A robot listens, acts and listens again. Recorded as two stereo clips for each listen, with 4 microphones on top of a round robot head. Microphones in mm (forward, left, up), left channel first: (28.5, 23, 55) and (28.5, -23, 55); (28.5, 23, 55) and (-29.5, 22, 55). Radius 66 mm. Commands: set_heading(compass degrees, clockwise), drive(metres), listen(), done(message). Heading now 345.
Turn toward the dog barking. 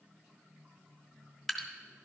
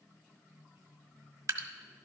listen()
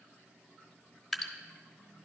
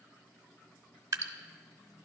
listen()
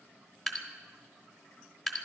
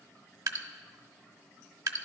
done("I can't make out a dog barking to turn to.")